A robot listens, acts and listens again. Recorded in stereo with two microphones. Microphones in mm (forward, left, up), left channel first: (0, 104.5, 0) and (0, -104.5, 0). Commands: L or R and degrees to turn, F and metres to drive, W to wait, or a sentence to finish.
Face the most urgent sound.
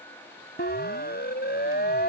L50
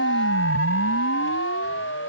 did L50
L80
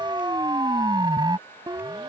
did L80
R20
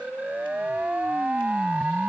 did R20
Facing the siren.